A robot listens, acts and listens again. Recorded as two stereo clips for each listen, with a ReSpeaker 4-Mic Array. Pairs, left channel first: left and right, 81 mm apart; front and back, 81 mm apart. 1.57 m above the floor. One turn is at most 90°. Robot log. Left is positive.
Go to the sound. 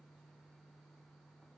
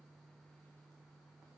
cmd idle
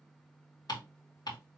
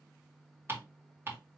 note: The ticking: 120° left.
cmd yaw +90
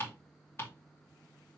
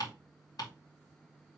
note: The ticking is now 35° left.
cmd yaw +35
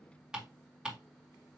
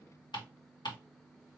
note: The ticking is now 10° right.
cmd yaw -10
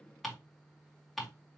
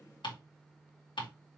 cmd fwd 1.0
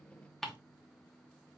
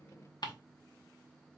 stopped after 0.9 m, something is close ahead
end: Arrived at the ticking, straight ahead.